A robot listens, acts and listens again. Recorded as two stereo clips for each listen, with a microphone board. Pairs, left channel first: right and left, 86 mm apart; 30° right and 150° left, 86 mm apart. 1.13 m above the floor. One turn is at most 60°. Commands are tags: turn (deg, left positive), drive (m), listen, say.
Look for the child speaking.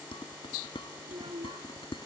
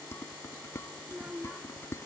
<turn deg="60"/>
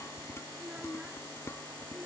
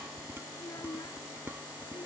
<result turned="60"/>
<turn deg="15"/>
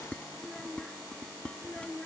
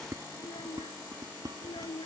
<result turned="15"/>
<turn deg="-10"/>
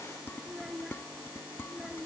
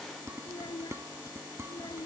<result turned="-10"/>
<say>Facing the child speaking.</say>